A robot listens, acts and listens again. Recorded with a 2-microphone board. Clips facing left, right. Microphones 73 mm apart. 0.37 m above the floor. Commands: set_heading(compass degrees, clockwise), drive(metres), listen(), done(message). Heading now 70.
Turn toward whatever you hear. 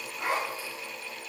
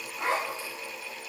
set_heading(95)
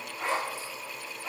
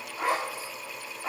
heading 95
set_heading(225)
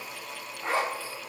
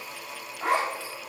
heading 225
set_heading(285)
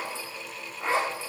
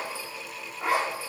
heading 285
set_heading(295)
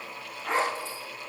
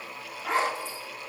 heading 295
done("Facing the zipper, over 4 m away.")